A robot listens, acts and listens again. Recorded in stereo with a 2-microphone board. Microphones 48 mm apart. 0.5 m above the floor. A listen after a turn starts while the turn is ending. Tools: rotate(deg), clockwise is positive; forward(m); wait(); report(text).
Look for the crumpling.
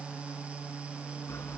wait()
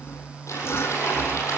rotate(-90)
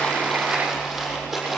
rotate(10)
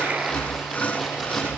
wait()
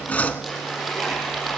report("Found it: crumpling, straight ahead.")